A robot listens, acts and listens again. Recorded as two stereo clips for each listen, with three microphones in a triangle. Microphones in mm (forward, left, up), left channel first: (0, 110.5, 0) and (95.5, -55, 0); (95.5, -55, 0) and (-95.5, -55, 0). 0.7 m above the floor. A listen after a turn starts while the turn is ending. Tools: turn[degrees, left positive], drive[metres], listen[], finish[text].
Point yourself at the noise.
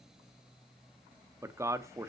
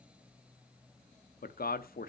Thought: The man speaking: 10° left.
Action: turn[10]
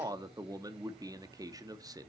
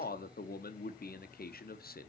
Thought: The man speaking is now 10° left.
Action: turn[10]
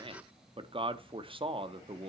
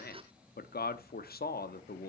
Action: finish[Found it: a man speaking, straight ahead.]